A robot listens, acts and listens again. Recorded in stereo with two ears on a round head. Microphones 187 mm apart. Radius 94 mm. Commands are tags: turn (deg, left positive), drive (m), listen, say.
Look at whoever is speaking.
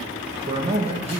<turn deg="-30"/>
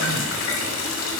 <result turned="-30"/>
<listen/>
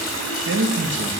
<turn deg="-120"/>
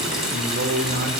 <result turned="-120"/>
<turn deg="-40"/>
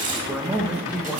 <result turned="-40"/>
<say>Facing the man speaking.</say>